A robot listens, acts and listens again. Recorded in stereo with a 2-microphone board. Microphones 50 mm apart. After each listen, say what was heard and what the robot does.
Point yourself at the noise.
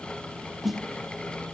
Turn 30° left.
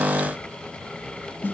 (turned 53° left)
So it is at 130° left. Turn 130° left.
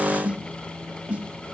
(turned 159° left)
The snare drum is now 30° right. Turn 30° right.
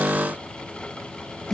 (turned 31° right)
Found it: a snare drum, straight ahead.